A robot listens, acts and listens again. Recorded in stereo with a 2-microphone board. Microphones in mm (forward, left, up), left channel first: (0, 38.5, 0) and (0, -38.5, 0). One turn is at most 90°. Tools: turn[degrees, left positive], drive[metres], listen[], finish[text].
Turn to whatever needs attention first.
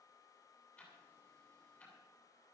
Action: listen[]
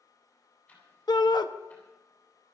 Thought: The shout: about 65° left or 115° left.
Action: turn[65]
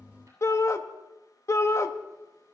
Thought: So it is at 40° left.
Action: turn[40]
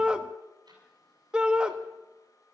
Thought: The shout is now 15° right.
Action: turn[-15]
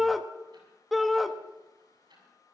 Action: finish[Found it: a shout, straight ahead, under 1 m away.]